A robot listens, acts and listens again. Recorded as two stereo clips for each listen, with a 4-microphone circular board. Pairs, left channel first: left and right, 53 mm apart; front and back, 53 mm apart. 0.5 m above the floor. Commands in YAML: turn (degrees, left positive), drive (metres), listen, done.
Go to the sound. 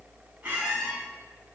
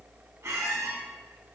turn: -150
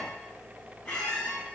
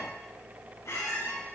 turn: 20
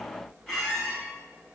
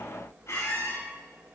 drive: 1.0
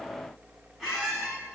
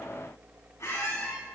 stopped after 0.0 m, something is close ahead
done: "Something is in my way. I am facing the squeak but have not reached it."